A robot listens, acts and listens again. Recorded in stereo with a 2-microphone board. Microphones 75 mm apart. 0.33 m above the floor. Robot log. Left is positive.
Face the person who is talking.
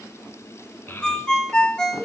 note: The child speaking: about 30° left or 150° left.
cmd yaw +30
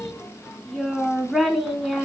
end: Facing the child speaking.